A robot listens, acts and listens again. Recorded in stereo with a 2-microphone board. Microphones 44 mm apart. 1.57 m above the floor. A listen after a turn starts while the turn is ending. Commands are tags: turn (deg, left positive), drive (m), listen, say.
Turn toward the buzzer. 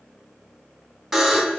<turn deg="30"/>
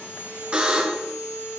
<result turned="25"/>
<turn deg="-25"/>
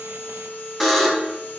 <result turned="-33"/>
<turn deg="10"/>
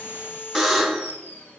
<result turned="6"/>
<say>Found it: a buzzer, straight ahead, 1 to 2 m away.</say>